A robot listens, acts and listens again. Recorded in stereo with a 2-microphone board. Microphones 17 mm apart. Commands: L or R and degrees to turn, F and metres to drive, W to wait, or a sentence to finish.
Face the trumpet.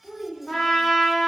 L35
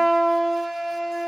Found it: a trumpet, straight ahead.